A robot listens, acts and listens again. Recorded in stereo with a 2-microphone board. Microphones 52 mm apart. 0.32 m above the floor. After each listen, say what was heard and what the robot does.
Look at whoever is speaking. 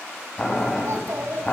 The child speaking: about 60° right or 120° right. Turn 60° right.
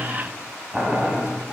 Keep listening.
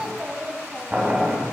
So it is at 20° right. Turn 20° right.
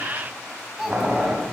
Facing the child speaking.